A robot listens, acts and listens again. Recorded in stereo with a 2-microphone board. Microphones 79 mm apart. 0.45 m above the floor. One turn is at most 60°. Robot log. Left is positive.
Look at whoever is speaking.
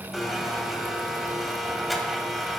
cmd idle
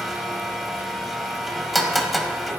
cmd idle
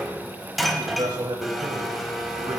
note: The man speaking: about 60° right or 120° right.
cmd yaw -60
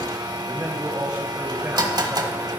note: So it is at 35° right.
cmd yaw -35
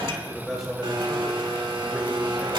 end: Facing the man speaking, 2 to 4 m away.